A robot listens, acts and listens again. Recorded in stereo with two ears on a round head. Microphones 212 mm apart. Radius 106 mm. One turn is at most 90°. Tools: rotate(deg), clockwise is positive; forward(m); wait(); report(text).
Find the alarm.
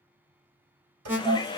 rotate(30)
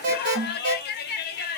rotate(90)
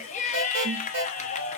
rotate(50)
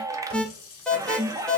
report("Found it: an alarm, straight ahead, under 1 m away.")